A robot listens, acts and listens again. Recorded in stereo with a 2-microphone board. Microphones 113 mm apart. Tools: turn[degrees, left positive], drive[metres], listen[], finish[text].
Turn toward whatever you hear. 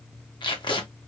Thought: The tape being pulled: about 45° left or 135° left.
Action: turn[45]
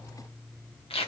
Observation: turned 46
Thought: So it is at 80° left.
Action: turn[80]
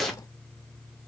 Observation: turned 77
Action: finish[Found it: tape being pulled, straight ahead.]